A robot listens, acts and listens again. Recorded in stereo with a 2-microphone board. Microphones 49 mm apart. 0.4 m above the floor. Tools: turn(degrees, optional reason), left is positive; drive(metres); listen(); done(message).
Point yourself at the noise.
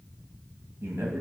turn(degrees=-60, reason="The man speaking: about 60° right or 120° right.")
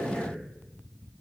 turn(degrees=-10, reason="So it is at 10° right.")
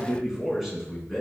done("Found it: a man speaking, straight ahead, 2 to 4 m away.")